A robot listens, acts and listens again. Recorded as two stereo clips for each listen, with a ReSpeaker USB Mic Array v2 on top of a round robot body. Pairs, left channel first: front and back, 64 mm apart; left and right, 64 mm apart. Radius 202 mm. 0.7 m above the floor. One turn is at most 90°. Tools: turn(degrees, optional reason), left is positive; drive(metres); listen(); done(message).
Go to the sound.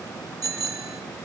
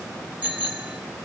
turn(degrees=-90, reason="The bicycle bell: 160° right.")
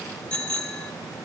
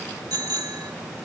turn(degrees=-70, reason="The bicycle bell is now 70° right.")
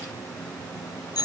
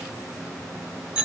turn(degrees=-15, reason="The bicycle bell is now 15° right.")
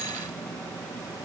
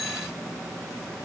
listen()
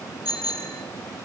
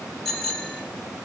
drive(metres=1.0)
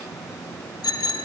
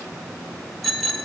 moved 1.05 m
drive(metres=1.0)
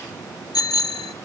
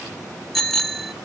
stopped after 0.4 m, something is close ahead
done("I am next to the bicycle bell.")